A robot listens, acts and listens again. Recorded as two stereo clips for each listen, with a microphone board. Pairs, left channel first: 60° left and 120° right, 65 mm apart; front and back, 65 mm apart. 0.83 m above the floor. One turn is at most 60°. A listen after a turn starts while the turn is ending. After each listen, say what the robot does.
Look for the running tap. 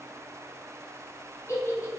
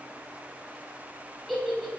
Keep listening.
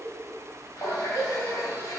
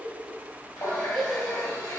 Turn 25° left.
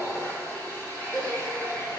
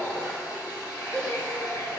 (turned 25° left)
Facing the running tap, 1 to 2 m away.